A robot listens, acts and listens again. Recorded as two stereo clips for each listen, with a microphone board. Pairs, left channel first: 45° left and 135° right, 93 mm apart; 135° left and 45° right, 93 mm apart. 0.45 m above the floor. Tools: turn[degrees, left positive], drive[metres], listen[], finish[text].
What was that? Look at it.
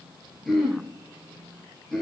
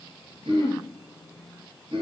Thought: The throat clearing: 45° right.
Action: turn[-45]
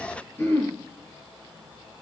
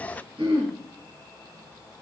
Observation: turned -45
Thought: The throat clearing is now 20° right.
Action: turn[-20]
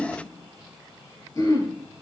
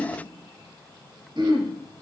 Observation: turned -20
Action: finish[Found it: throat clearing, straight ahead, over 4 m away.]